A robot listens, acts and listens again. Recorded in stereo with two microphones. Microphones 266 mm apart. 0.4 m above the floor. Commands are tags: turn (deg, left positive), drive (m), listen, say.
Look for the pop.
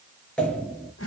<turn deg="30"/>
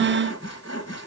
<listen/>
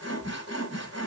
<say>I heard a pop, but can't make it out now. It was about 25° right or 145° left.</say>